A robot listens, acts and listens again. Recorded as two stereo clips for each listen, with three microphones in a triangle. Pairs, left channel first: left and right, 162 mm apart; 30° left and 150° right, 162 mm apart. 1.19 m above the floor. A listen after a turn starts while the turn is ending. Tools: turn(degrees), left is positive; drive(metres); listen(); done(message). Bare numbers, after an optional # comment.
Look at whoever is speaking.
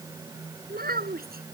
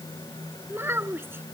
# The child speaking: 75° right.
turn(-75)
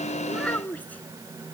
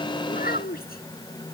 # The child speaking is now 10° left.
turn(10)
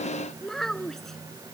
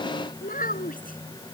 done("Found it: a child speaking, straight ahead.")